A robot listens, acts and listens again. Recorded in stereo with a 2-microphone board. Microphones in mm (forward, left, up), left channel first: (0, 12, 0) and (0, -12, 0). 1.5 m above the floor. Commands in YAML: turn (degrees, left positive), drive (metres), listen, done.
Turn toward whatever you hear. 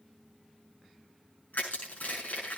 turn: 75
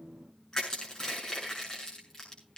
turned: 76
turn: 30
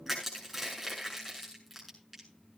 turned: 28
done: "Facing the crushing, over 4 m away."